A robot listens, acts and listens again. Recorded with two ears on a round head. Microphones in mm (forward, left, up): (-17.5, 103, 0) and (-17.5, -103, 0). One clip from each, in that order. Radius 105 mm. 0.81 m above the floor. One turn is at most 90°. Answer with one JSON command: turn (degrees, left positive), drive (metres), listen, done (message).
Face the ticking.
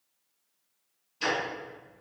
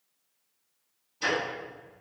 {"turn": 55}
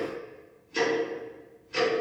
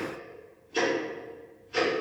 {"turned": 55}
{"turn": 20}
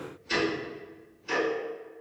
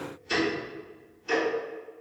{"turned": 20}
{"done": "Found it: ticking, straight ahead."}